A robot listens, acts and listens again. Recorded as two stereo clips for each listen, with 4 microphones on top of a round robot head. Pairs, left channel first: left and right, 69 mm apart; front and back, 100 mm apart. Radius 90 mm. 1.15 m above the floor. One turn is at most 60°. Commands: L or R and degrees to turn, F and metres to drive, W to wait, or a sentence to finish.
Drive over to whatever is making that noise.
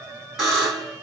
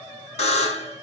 F1.0
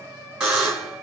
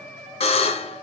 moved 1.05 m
R10
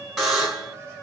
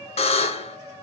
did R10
F1.0
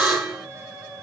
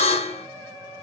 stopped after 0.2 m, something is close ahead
Arrived at the buzzer, straight ahead.